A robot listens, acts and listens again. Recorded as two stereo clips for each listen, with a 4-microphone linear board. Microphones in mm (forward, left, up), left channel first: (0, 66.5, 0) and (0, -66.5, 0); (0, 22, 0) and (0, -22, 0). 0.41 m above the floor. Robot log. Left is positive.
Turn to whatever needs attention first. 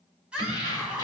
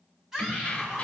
cmd yaw -30
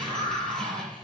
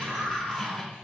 note: So it is at 140° right.
cmd yaw -140
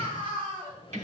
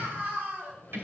note: The scream is now 45° right.
cmd yaw -45
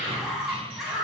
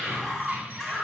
end: Found it: a scream, straight ahead.